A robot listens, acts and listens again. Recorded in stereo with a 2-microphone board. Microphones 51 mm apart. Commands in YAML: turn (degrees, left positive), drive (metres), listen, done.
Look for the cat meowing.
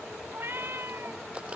turn: -45
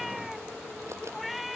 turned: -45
done: "Facing the cat meowing."